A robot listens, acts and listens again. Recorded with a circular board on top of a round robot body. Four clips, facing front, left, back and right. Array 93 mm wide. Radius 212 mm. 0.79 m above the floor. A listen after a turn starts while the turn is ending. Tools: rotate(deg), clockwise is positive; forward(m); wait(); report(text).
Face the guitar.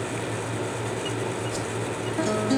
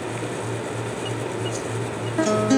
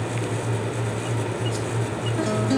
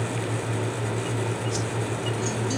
rotate(-90)
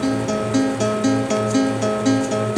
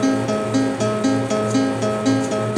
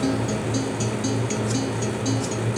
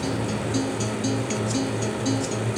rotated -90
rotate(-45)
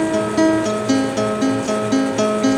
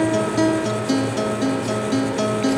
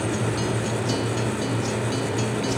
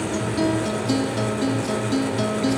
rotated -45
rotate(-15)
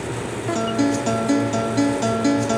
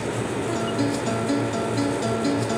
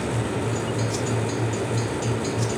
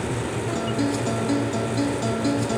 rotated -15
report("Facing the guitar.")